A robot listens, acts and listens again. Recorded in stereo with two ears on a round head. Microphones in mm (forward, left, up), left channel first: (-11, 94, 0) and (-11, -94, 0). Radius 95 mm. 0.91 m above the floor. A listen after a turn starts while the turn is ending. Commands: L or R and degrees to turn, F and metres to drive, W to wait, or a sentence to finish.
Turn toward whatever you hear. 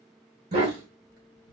R50
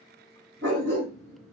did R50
R55
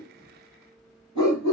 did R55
L25
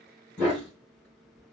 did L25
Facing the dog barking.